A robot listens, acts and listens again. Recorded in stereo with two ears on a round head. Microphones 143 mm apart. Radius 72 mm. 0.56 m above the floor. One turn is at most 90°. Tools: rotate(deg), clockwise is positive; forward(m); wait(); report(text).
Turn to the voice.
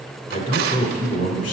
rotate(-50)
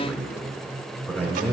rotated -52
rotate(-10)
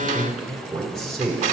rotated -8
report("Found it: a man speaking, straight ahead, 1 to 2 m away.")